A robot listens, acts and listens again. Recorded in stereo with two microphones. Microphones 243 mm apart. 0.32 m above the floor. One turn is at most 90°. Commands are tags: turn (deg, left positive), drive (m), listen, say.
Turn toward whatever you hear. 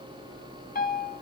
<turn deg="35"/>
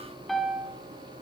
<say>Found it: a piano, straight ahead, 1 to 2 m away.</say>